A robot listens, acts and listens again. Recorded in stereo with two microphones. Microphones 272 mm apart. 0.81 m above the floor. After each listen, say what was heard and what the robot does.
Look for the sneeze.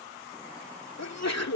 The sneeze: about 70° left or 110° left. Turn 70° left.
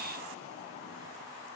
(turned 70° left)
Keep listening.
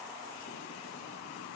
I heard a sneeze, but can't make it out now. It was about straight ahead or 40° left.